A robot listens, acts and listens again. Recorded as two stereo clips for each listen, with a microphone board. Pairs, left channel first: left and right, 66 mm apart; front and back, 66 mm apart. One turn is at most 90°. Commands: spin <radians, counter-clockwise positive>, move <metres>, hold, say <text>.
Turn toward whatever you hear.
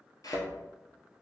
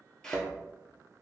spin 1.40
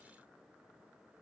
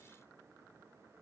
say Facing where the thud came from. I can't hear it now.